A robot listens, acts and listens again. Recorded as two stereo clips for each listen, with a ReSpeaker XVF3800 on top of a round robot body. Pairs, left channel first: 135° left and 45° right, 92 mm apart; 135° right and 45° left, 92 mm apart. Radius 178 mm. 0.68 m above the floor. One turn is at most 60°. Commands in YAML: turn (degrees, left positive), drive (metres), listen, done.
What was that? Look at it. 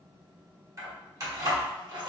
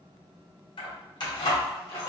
turn: -60
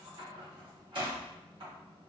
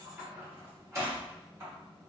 turn: -10
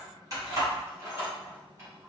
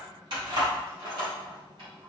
turn: 10
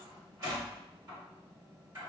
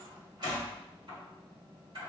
done: "Facing the keys jangling."